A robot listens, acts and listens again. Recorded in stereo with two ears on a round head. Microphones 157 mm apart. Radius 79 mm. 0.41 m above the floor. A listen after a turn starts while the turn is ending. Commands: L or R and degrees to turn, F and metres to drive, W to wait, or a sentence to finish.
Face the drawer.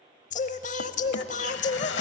L90
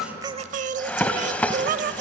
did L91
L10
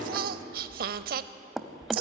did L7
Facing the drawer.